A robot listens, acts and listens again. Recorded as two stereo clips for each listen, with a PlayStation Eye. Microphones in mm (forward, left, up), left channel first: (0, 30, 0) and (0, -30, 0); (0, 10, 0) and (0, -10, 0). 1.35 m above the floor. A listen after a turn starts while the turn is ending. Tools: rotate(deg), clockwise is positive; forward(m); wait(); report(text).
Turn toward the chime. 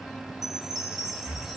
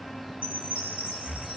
rotate(90)
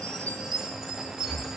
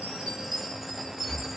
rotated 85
report("Facing the chime, over 4 m away.")